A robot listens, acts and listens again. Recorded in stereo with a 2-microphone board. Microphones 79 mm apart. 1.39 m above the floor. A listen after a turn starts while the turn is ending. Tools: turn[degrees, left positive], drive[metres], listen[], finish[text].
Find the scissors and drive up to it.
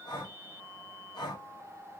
Action: listen[]
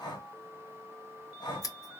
Thought: The scissors: about 45° left or 135° left.
Action: turn[45]
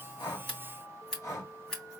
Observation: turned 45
Action: drive[1.0]
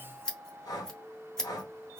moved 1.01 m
Thought: The scissors is now 10° left.
Action: turn[10]
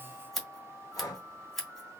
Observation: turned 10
Action: drive[1.0]
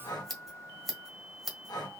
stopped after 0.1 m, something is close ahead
Action: finish[I am next to the scissors.]